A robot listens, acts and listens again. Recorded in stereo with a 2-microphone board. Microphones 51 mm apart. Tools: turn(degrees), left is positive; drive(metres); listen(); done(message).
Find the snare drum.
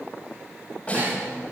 turn(degrees=25)
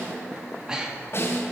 turn(degrees=125)
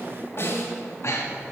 turn(degrees=50)
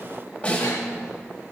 turn(degrees=25)
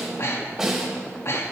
turn(degrees=-10)
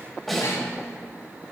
done("Found it: a snare drum, straight ahead, 2 to 4 m away.")